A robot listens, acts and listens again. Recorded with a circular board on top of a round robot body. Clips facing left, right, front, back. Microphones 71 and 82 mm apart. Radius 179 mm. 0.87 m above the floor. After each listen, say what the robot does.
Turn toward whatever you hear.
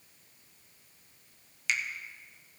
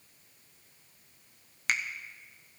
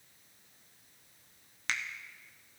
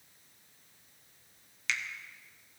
Turn 50° right.
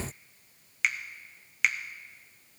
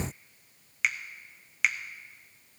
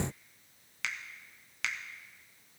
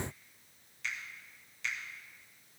Facing the finger snap.